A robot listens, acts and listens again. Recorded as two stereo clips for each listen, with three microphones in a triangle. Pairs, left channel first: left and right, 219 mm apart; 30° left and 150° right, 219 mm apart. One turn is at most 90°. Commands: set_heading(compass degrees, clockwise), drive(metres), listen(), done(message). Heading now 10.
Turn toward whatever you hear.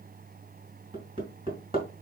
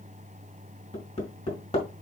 set_heading(40)
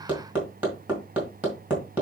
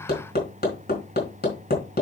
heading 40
set_heading(50)
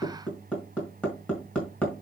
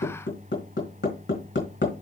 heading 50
done("Facing the hammering, over 4 m away.")